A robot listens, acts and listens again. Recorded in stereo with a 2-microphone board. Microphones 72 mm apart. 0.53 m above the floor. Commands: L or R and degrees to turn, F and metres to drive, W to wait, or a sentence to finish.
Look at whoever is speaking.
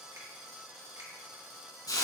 W
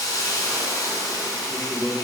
R20
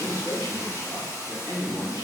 R140
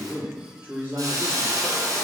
R35
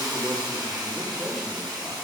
W
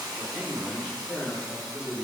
Found it: a man speaking, straight ahead.